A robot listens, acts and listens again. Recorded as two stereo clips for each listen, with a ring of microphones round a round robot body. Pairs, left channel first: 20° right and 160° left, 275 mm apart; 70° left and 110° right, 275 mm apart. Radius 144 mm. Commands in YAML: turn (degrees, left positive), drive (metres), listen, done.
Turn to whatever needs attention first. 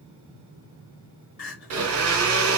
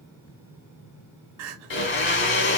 turn: -75
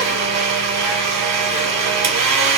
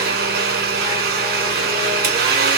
listen: true
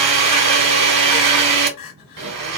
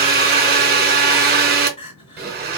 done: "Facing the crying, 1 to 2 m away."